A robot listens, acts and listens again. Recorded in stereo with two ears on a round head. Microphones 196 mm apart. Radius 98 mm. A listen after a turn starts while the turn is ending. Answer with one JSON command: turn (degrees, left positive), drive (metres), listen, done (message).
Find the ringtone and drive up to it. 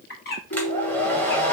{"turn": 60}
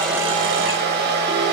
{"listen": true}
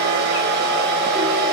{"listen": true}
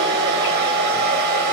{"done": "I heard a ringtone, but can't make it out now. It was about straight ahead or 60° left. I did not reach it."}